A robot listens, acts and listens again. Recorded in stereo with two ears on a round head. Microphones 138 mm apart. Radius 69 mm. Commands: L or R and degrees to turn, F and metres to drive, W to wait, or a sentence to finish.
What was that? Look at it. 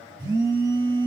R30
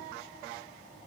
W
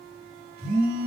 R125
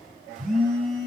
Found it: a phone buzzing, straight ahead.